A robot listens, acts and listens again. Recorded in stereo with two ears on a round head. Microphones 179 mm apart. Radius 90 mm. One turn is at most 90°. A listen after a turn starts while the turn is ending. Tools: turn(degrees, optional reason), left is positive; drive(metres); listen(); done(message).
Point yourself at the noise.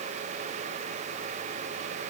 listen()
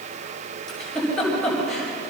turn(degrees=30)
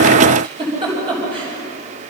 turn(degrees=-25, reason="So it is at 25° right.")
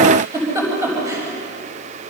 turn(degrees=-15, reason="The giggle is now 15° right.")
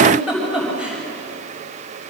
done("Facing the giggle, over 4 m away.")